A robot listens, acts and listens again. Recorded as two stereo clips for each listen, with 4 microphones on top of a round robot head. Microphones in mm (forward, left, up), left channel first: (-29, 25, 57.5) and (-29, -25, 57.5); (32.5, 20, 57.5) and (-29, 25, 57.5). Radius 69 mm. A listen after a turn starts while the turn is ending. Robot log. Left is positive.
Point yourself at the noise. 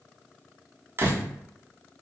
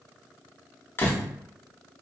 note: The door slam: 55° right.
cmd yaw -55
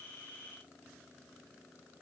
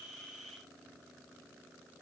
end: I heard a door slam from this way, but can't make it out now.